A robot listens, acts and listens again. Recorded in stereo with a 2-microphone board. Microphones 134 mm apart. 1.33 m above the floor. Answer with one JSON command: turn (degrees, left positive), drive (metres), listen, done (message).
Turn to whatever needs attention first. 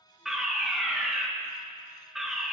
{"turn": 30}
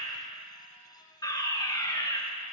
{"turn": 150}
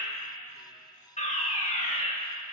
{"turn": 60}
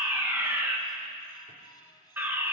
{"turn": -15}
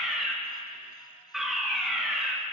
{"done": "Facing the fire alarm."}